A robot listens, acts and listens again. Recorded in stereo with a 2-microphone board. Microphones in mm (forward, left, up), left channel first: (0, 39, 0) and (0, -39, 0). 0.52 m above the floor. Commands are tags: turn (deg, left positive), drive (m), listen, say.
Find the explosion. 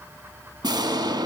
<turn deg="-65"/>
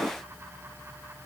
<turn deg="-10"/>
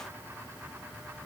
<say>I heard an explosion from this way, but can't make it out now.</say>